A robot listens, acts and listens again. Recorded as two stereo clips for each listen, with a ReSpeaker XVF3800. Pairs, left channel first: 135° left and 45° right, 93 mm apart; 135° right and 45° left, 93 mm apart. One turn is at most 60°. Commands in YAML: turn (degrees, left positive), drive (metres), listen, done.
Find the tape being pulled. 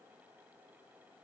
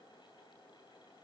listen: true
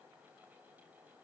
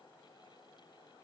listen: true
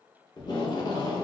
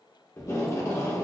turn: 60
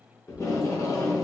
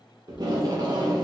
turn: 60
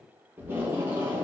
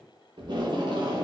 turn: 20
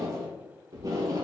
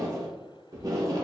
done: "Found it: tape being pulled, straight ahead, under 1 m away."